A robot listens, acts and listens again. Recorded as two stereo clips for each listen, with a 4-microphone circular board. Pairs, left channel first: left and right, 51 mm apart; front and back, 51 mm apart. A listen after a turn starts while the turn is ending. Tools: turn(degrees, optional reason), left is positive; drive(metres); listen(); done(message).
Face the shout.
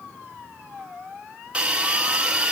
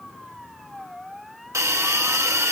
listen()
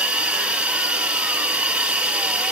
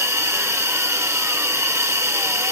listen()
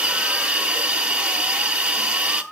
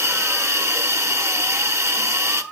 done("I can't make out a shout to turn to.")